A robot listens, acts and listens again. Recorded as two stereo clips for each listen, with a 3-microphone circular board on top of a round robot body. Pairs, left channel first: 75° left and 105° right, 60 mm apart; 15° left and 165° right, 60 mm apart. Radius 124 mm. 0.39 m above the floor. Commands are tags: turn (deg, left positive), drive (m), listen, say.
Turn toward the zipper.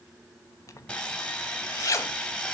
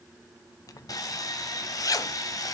<turn deg="40"/>
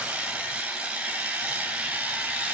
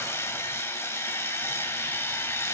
<listen/>
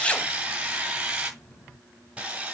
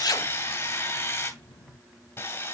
<say>Facing the zipper.</say>